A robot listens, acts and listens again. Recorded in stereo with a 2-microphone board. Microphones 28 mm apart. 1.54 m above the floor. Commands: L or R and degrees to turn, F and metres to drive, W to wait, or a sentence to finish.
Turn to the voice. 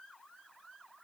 W
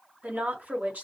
R90
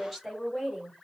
Facing the woman speaking, 2 to 4 m away.